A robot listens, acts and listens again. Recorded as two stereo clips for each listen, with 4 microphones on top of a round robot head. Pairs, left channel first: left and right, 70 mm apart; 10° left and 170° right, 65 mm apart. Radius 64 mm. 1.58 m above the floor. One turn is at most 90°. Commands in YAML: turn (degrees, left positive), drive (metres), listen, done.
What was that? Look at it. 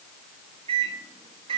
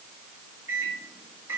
turn: -90
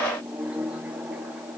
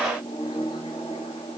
turn: -15
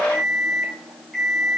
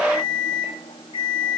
done: "Found it: a microwave, straight ahead, 1 to 2 m away."